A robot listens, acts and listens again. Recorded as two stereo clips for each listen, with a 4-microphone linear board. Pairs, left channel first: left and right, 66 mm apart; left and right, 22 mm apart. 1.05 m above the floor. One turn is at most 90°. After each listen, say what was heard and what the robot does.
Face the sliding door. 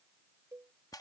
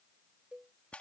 Keep listening.
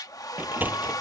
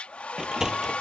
The sliding door: about 30° right or 150° right. Turn 30° right.
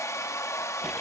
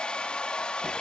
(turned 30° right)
Keep listening.
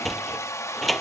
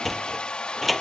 Found it: a sliding door, straight ahead.